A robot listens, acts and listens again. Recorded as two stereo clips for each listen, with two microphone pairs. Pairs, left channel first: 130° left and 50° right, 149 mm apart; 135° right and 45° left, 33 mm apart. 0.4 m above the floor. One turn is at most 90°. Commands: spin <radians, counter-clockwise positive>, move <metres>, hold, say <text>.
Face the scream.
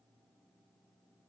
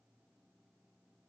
hold
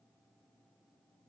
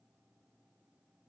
hold
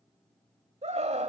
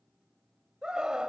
spin -0.26
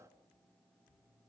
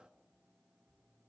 hold
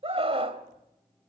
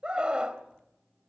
say Facing the scream, 1 to 2 m away.